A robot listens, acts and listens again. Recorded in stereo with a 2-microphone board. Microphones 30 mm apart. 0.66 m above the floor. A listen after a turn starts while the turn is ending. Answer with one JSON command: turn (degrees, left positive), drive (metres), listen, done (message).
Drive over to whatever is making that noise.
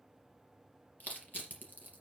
{"turn": 90}
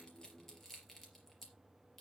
{"turn": 10}
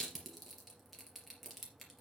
{"drive": 1.0}
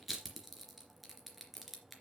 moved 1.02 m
{"drive": 1.0}
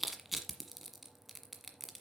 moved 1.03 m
{"drive": 1.0}
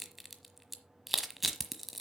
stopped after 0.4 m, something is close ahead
{"done": "I am next to the crushing."}